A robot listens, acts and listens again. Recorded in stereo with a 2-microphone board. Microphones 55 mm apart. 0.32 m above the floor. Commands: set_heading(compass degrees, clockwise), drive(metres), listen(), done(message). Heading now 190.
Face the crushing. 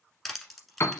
set_heading(160)
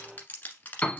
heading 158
set_heading(13)
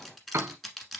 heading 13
done("Facing the crushing.")